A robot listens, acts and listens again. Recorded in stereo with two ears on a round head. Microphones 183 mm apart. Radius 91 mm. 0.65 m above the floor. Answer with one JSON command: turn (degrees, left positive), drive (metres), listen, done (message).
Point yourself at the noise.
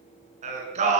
{"turn": -35}
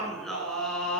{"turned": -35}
{"done": "Facing the singing, over 4 m away."}